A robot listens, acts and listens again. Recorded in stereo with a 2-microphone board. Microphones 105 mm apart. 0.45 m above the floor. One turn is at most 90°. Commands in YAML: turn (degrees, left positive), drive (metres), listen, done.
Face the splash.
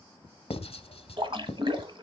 turn: -55
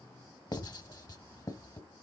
listen: true
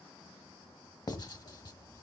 done: "I heard a splash, but can't make it out now. It was about straight ahead or 70° right."